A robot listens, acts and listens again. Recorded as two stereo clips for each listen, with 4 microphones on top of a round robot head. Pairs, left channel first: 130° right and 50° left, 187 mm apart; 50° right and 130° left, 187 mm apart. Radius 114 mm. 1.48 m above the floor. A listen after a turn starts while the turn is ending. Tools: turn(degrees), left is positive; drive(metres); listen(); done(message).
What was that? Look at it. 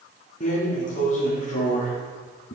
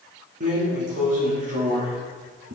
turn(degrees=180)
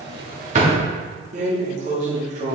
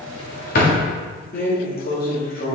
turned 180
done("Found it: a drawer, straight ahead, 1 to 2 m away.")